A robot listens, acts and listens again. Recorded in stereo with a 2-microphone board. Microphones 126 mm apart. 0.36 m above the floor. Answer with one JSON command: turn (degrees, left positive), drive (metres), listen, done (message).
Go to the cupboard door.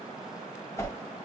{"listen": true}
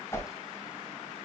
{"listen": true}
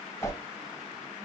{"done": "I can't make out a cupboard door to turn to."}